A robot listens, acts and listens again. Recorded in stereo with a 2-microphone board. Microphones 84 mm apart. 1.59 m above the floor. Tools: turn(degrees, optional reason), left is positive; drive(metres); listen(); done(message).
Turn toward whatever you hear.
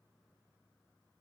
listen()
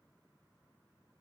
listen()
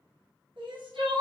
turn(degrees=-90)
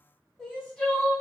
turn(degrees=10, reason="So it is at 10° left.")
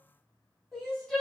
done("Found it: crying, straight ahead, 1 to 2 m away.")